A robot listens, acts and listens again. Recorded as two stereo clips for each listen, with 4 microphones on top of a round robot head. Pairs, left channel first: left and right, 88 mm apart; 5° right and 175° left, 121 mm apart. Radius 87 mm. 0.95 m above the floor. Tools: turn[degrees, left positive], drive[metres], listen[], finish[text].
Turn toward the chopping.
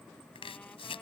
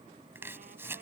Thought: The chopping: 105° left.
Action: turn[105]
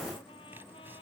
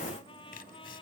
Action: listen[]
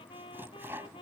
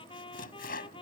Thought: The chopping is now 15° right.
Action: turn[-15]
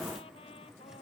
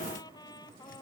Action: listen[]
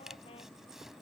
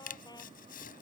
Action: finish[Facing the chopping.]